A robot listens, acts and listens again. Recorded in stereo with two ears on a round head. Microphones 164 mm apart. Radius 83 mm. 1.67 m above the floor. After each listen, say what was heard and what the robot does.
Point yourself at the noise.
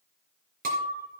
The breaking glass: about 50° right or 130° right. Turn 50° right.
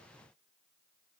Keep listening.
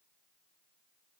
I heard breaking glass, but can't make it out now. It was about straight ahead or 80° right.